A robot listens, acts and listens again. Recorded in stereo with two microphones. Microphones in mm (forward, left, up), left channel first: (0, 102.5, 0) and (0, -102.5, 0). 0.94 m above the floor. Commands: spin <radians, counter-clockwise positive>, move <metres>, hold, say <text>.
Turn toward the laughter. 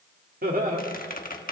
spin -0.70
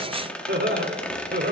spin -2.18
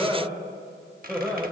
say Found it: laughter, straight ahead.